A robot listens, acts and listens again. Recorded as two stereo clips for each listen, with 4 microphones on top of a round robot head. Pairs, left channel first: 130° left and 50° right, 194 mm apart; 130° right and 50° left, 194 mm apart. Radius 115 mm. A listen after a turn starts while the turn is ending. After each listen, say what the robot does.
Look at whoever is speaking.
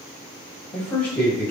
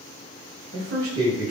Turn 50° left.
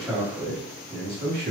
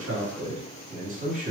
Facing the man speaking.